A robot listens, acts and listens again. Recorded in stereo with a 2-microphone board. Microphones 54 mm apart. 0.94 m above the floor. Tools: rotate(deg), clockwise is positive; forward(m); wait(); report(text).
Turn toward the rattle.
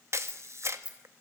rotate(20)
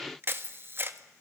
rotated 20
rotate(140)
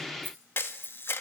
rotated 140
rotate(45)
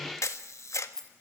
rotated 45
rotate(-10)
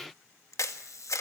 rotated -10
wait()
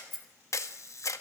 report("Facing the rattle.")